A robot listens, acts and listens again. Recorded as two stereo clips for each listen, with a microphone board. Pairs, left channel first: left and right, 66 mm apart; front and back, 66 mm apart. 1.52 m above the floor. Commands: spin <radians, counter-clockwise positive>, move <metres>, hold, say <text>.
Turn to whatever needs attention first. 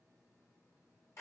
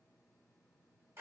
hold
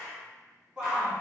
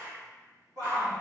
spin -2.88
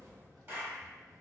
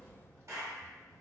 hold
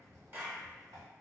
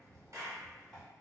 hold
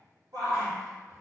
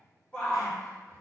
spin -1.40
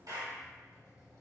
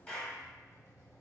hold
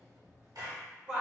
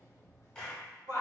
spin -0.17
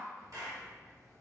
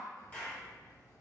hold
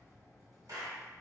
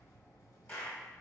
hold
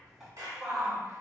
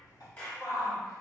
say Facing the shout.